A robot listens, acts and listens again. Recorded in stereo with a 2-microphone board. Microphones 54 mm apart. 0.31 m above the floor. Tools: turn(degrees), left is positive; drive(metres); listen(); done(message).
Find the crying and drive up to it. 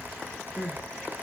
turn(degrees=-20)
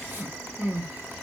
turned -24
turn(degrees=-135)
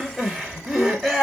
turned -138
drive(metres=1.0)
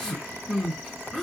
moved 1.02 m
turn(degrees=10)
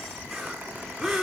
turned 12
drive(metres=1.0)
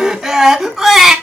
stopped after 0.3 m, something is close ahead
done("Arrived at the crying, straight ahead.")